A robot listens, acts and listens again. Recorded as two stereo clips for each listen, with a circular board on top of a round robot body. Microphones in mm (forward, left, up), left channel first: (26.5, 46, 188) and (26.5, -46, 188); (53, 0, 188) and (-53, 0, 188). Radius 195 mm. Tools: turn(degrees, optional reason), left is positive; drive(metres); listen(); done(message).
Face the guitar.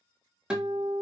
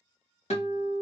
turn(degrees=-10, reason="The guitar: 10° right.")
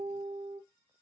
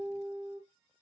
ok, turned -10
done("Facing the guitar, 1 to 2 m away.")